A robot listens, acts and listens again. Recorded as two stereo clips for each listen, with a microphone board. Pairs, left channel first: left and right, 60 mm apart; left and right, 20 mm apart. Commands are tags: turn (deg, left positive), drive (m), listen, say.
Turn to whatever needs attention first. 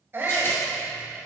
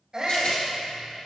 <turn deg="-35"/>
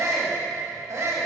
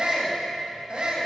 <turn deg="-100"/>
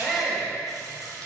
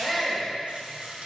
<say>Facing the shout.</say>